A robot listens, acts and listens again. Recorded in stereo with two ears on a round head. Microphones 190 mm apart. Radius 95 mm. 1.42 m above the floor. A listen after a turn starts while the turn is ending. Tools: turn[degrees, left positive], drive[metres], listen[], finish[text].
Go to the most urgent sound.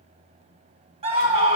Thought: The scream: about 30° right or 150° right.
Action: turn[-30]
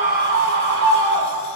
Thought: So it is at 120° right.
Action: turn[-120]
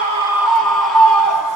Action: drive[1.0]
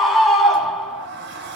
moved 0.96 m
Action: drive[1.0]
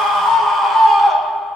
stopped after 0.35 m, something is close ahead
Action: finish[Arrived at the scream, straight ahead.]